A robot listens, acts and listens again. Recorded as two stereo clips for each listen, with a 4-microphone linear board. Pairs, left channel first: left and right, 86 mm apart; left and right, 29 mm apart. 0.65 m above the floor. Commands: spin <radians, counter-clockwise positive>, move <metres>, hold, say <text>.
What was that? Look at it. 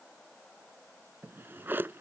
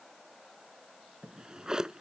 spin -0.44
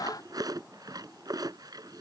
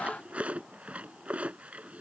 spin -2.27
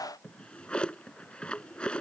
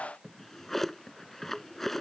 spin 0.17
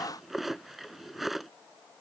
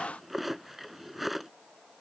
say Found it: a drawer, straight ahead.